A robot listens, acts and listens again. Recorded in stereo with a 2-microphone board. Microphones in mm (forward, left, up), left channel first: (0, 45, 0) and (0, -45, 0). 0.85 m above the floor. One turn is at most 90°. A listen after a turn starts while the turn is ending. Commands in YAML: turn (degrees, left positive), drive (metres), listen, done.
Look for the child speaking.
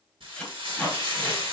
listen: true
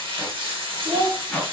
turn: -45
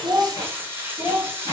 turn: -15
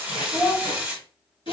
turn: -30
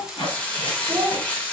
turn: -20
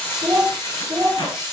done: "Facing the child speaking."